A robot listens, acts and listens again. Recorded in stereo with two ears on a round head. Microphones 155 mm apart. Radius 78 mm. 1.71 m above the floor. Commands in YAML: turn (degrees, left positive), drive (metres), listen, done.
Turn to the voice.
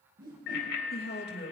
turn: 60
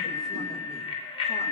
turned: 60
listen: true
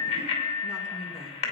listen: true
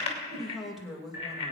done: "Found it: a woman speaking, straight ahead."